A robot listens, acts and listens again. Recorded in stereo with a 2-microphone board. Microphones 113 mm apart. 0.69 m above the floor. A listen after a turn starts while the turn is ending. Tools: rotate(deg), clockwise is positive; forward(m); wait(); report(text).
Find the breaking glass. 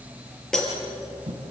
rotate(-30)
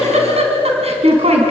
wait()
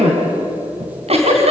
report("I heard breaking glass, but can't make it out now. It was about 25° right or 145° left.")